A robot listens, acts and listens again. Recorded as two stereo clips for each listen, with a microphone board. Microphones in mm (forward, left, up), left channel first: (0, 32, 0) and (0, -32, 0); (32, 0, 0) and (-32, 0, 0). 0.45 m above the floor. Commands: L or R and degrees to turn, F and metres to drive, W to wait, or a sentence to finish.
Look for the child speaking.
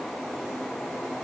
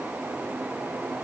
W
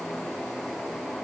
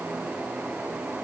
W
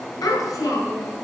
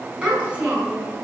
L110
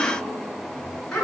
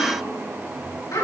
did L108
L10
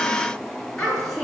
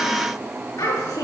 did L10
Facing the child speaking.